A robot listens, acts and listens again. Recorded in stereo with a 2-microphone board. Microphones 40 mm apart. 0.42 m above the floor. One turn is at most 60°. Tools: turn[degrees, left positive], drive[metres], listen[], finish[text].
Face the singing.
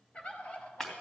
Action: listen[]
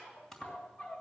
Action: listen[]
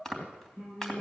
Thought: The singing: about 70° left or 110° left.
Action: turn[60]
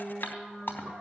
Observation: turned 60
Thought: So it is at 50° left.
Action: turn[50]
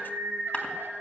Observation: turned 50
Thought: The singing is now 20° right.
Action: turn[-20]
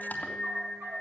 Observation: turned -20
Action: finish[Found it: singing, straight ahead.]